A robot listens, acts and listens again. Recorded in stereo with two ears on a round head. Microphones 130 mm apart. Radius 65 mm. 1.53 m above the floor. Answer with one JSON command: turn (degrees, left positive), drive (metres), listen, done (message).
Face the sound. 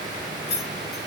{"turn": 90}
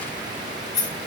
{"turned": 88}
{"turn": 30}
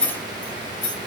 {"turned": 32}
{"turn": 15}
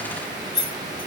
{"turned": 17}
{"done": "Found it: keys jangling, straight ahead, 2 to 4 m away."}